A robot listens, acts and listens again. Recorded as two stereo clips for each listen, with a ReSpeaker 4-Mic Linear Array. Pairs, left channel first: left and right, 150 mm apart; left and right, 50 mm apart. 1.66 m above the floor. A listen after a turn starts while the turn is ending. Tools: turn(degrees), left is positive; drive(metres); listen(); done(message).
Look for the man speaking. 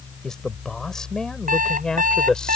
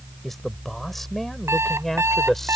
turn(degrees=30)
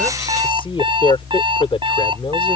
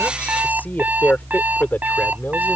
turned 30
turn(degrees=145)
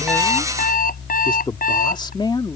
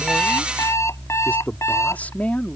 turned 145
turn(degrees=30)
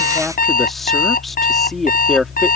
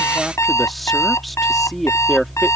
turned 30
done("Facing the man speaking.")